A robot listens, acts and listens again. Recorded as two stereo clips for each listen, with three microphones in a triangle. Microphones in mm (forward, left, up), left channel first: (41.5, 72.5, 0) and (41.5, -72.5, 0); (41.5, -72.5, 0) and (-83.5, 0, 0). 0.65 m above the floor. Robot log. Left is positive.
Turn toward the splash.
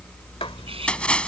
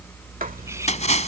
end: Found it: a splash, straight ahead.